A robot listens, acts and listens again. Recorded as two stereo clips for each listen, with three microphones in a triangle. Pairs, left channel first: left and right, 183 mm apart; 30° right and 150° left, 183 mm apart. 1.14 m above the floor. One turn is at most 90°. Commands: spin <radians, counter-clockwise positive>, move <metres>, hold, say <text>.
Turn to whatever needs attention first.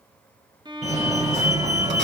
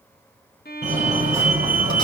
spin -1.57
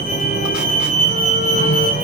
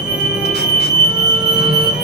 spin -0.87
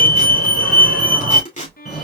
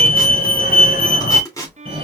say Facing the fire alarm, 2 to 4 m away.